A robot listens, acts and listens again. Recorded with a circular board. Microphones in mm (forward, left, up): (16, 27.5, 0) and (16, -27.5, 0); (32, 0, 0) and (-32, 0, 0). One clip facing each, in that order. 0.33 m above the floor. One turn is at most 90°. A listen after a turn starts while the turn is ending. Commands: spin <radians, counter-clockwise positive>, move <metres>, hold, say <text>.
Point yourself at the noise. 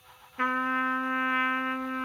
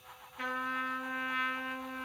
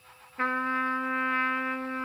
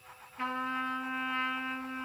spin 0.70
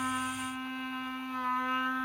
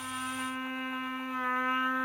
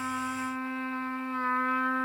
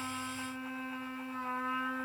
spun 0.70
spin -0.44
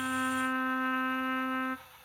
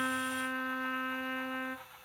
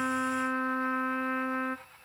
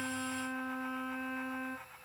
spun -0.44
spin 0.26
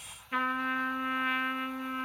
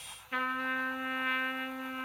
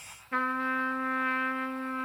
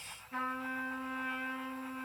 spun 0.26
say Found it: a trumpet, straight ahead, under 1 m away.